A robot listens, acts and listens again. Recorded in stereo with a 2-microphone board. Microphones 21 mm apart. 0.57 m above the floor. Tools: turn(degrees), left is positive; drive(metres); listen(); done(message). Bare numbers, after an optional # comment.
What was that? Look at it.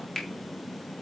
turn(30)
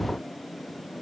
listen()
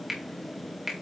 # So it is at 15° right.
turn(-15)
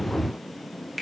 done("Facing the finger snap, 2 to 4 m away.")